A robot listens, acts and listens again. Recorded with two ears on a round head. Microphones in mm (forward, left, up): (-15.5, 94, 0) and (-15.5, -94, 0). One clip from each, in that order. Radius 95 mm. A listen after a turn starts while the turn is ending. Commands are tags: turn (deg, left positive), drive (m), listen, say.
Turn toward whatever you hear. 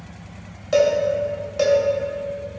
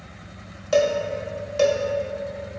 <turn deg="-15"/>
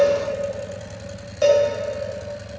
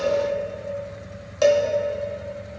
<turn deg="-150"/>
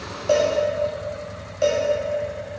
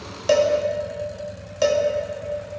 <turn deg="-50"/>
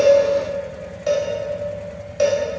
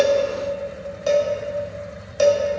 <turn deg="-20"/>
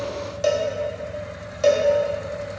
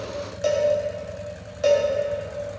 <turn deg="10"/>
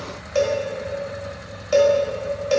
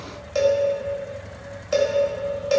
<say>Facing the cowbell.</say>